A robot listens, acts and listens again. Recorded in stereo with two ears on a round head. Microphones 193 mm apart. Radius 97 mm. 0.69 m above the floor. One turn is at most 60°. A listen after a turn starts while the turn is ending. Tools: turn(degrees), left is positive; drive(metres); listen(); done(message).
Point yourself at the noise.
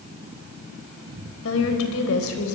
turn(degrees=60)
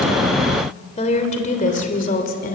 turn(degrees=45)
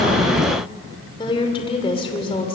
turn(degrees=25)
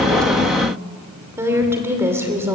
turn(degrees=-10)
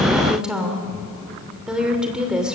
done("Found it: a woman speaking, straight ahead.")